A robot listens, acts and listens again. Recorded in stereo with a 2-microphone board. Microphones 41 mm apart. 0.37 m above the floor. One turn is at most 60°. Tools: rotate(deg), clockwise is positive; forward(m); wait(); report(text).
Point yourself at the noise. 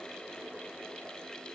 wait()
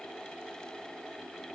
wait()
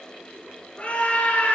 rotate(-35)
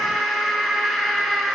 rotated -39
report("Found it: a scream, straight ahead, over 4 m away.")